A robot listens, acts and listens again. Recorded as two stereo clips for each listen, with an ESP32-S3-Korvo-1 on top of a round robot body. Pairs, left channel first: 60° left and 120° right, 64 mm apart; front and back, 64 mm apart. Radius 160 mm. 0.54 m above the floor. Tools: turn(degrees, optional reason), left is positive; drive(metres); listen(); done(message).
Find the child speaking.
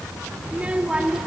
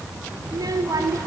turn(degrees=160, reason="The child speaking: 160° left.")
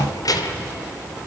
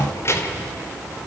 turn(degrees=45, reason="The child speaking is now 45° left.")
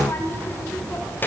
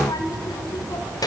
done("Facing the child speaking.")